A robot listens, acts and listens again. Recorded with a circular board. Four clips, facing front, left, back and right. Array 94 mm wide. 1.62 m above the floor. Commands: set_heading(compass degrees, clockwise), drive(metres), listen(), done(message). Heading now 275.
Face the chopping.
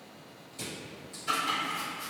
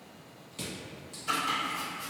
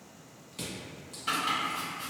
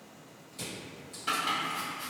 set_heading(35)
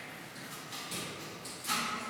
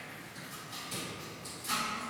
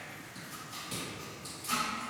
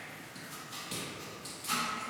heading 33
done("Found it: chopping, straight ahead.")